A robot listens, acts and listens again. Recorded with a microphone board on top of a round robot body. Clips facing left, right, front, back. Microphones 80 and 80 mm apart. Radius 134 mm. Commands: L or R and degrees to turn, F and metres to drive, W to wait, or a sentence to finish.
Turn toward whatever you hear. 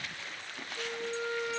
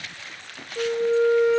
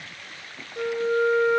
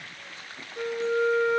R80
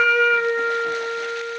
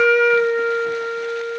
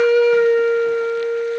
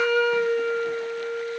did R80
Facing the flute.